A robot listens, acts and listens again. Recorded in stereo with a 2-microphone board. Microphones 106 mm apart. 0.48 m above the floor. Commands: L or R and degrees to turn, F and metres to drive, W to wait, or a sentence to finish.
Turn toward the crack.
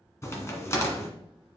L25
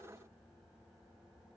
W
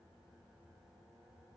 I heard a crack, but can't make it out now. It was about straight ahead or 130° left.